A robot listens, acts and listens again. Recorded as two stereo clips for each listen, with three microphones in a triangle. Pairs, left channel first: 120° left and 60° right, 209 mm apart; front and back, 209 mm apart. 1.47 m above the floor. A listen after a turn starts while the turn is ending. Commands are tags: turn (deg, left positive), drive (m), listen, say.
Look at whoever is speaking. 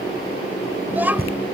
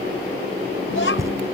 <turn deg="20"/>
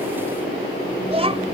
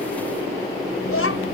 <say>Found it: a child speaking, straight ahead.</say>